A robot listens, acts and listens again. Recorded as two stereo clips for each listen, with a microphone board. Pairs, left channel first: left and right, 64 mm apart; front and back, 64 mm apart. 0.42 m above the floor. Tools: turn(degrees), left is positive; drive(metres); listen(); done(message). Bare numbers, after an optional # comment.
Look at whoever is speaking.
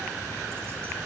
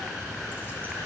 listen()
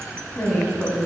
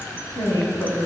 # The woman speaking: 15° left.
turn(15)
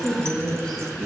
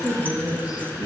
done("Found it: a woman speaking, straight ahead, 2 to 4 m away.")